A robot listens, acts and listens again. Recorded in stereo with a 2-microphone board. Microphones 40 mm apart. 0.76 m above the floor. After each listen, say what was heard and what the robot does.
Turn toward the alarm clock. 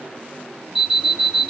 Turn 30° right.
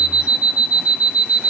So it is at 140° right. Turn 140° right.
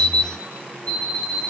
The alarm clock is now 25° left. Turn 25° left.
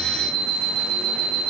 The alarm clock is now 20° left. Turn 20° left.
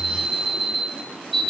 Found it: an alarm clock, straight ahead.